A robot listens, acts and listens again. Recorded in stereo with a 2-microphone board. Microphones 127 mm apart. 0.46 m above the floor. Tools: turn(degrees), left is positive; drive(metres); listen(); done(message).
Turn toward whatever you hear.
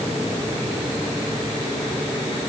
listen()
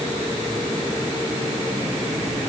listen()
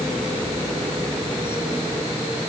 done("I can't make out anything to turn to.")